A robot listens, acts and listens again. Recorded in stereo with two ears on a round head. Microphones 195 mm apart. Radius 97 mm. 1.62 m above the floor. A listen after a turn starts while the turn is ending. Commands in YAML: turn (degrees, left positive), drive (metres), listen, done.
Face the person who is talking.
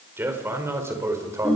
turn: -30
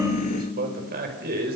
turn: -135
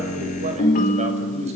listen: true
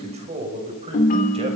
turn: -30
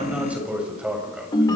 done: "Found it: a man speaking, straight ahead, over 4 m away."